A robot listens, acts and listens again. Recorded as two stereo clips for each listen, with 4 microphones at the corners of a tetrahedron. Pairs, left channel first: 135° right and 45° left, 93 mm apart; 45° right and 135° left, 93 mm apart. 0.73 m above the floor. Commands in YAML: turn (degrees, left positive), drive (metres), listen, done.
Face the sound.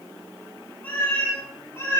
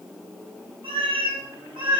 turn: 165
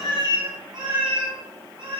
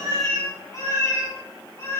turn: 15
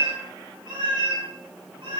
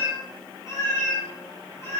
turn: 15
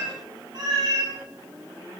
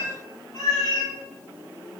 done: "Facing the cat meowing, 2 to 4 m away."